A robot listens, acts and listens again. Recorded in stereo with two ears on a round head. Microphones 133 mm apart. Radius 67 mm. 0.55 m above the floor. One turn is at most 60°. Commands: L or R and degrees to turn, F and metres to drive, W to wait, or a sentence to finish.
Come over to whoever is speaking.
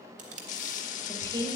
R25
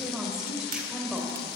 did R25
F1.0
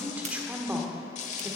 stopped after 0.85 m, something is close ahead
R10
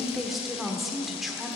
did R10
Arrived at the woman speaking, straight ahead.